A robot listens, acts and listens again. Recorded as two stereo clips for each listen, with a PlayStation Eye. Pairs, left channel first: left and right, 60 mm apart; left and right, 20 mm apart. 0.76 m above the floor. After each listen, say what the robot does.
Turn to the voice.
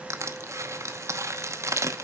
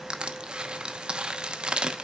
Keep listening.
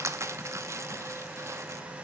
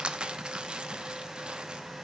Keep listening.
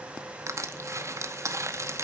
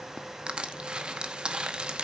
I can't make out anyone speaking, only crushing.